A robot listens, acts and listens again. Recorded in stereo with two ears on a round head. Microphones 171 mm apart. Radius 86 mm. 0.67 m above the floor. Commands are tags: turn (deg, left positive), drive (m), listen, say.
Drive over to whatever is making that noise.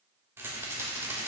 <turn deg="-30"/>
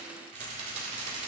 <turn deg="-135"/>
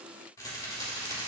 <turn deg="20"/>
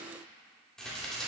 <drive m="1.0"/>
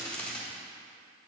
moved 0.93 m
<turn deg="10"/>
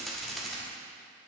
<drive m="1.0"/>
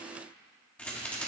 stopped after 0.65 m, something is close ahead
<turn deg="10"/>
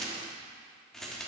<say>I am next to the rattle.</say>